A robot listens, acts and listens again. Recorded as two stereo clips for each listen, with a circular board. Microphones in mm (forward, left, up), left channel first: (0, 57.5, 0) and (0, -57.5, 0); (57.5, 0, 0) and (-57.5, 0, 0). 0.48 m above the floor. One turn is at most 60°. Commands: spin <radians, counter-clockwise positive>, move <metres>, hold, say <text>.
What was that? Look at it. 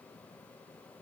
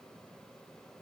hold
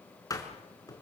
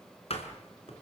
spin 0.52
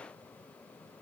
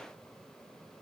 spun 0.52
say I heard a door slam from this way, but can't make it out now.